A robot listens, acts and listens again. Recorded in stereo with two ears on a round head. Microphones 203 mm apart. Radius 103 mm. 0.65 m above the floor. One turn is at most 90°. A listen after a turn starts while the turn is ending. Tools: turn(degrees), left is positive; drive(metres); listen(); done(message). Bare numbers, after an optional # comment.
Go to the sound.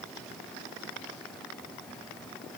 listen()
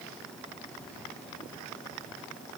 listen()
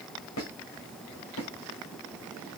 # The squeak: about 60° left or 120° left.
turn(60)
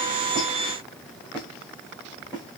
drive(1.0)
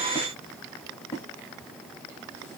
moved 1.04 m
# The squeak is now 10° left.
turn(10)
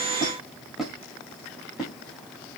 drive(1.0)
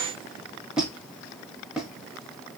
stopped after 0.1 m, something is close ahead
done("Arrived at the squeak, straight ahead.")